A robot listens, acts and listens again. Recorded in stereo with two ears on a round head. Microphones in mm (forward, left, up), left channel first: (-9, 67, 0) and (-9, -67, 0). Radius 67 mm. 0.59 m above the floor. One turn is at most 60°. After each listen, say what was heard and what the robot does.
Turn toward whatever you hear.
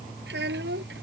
Turn 60° right.
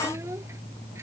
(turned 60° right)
Nothing new. It was at 30° right. Turn 30° right.
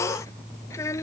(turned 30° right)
The child speaking is now 20° left. Turn 20° left.
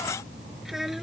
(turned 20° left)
Keep listening.
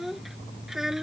Facing the child speaking.